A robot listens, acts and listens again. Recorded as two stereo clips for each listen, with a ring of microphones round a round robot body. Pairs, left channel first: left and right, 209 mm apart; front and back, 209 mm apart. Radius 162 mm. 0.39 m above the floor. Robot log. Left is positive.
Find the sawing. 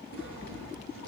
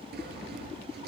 note: The sawing: 140° left.
cmd yaw +140
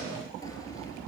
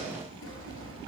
note: The sawing is now 15° left.
cmd yaw +15
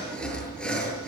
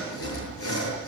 end: Found it: sawing, straight ahead.